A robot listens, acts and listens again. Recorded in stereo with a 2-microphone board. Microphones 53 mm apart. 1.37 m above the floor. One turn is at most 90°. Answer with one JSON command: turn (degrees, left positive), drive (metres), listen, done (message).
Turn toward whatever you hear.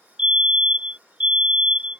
{"turn": -30}
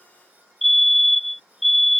{"done": "Found it: a fire alarm, straight ahead."}